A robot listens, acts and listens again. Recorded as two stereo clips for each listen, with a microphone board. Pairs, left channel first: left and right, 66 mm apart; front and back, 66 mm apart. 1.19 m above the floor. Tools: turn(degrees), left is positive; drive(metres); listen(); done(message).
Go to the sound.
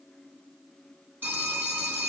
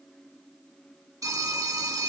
turn(degrees=-150)
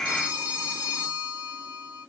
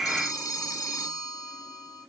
turn(degrees=-25)
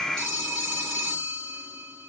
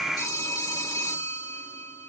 turn(degrees=10)
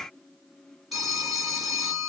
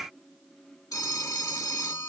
drive(metres=1.0)
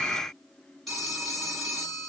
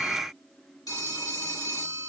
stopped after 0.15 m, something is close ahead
done("Blocked. The phone ringing is further on, straight ahead.")